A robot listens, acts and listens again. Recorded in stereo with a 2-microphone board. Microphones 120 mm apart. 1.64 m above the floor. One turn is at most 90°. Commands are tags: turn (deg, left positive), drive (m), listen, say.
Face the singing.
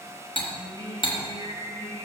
<turn deg="-45"/>
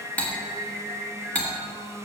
<turn deg="-15"/>
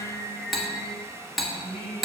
<say>Facing the singing.</say>